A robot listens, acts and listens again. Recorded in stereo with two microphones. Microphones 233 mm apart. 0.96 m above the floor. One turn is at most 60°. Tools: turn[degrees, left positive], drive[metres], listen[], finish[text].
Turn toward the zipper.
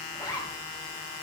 Thought: The zipper: about 15° left or 165° left.
Action: turn[15]
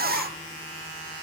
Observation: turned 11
Action: listen[]
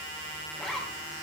Action: finish[Facing the zipper.]